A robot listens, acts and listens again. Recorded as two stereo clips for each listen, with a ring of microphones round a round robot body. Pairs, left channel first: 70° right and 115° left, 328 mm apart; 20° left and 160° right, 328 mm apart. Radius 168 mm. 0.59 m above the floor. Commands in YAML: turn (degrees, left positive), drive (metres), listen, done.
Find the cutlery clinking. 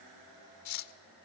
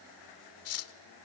turn: -25
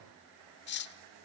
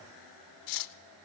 turn: -10
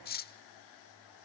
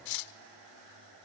done: "Found it: cutlery clinking, straight ahead, 1 to 2 m away."